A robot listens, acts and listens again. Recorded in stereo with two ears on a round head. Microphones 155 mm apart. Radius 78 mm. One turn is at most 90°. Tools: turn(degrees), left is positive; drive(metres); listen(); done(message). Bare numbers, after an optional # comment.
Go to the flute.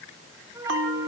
# The flute: about 15° right or 165° right.
turn(-15)
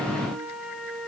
drive(1.0)
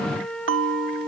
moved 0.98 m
drive(1.0)
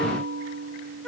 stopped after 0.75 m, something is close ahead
done("I am next to the flute.")